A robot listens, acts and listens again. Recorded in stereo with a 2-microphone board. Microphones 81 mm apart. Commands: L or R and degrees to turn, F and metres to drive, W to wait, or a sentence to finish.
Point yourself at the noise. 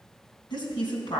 L65
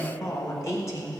L40
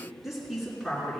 Found it: a woman speaking, straight ahead.